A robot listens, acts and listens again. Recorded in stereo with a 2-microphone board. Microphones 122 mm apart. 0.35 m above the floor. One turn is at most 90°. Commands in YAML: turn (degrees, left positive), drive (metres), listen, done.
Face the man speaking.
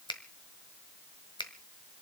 listen: true
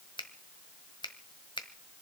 listen: true
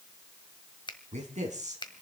turn: -70
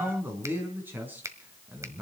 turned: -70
turn: -15
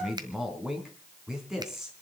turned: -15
done: "Found it: a man speaking, straight ahead."